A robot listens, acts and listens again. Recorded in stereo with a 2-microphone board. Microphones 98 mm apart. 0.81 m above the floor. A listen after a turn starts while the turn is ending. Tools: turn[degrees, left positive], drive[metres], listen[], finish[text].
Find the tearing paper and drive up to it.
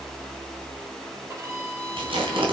Thought: The tearing paper: about 70° right or 110° right.
Action: turn[-70]
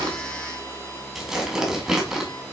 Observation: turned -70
Action: drive[1.0]
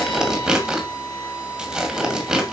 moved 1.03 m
Thought: The tearing paper is now 10° right.
Action: turn[-10]
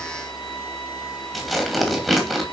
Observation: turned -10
Action: drive[1.0]
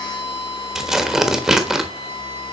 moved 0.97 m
Action: drive[1.0]
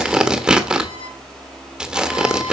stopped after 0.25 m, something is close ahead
Thought: The tearing paper is now 10° right.
Action: turn[-10]
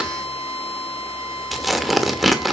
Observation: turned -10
Action: finish[I am next to the tearing paper.]